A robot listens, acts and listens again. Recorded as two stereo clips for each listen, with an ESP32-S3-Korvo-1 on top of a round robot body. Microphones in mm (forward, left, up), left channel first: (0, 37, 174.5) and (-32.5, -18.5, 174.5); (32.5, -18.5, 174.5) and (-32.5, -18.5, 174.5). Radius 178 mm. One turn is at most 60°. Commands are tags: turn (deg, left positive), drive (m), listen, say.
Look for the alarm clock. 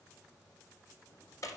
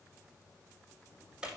<listen/>
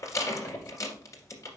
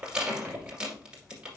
<listen/>
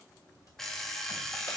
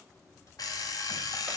<turn deg="-25"/>
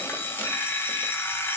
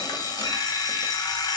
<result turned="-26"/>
<say>Found it: an alarm clock, straight ahead, 1 to 2 m away.</say>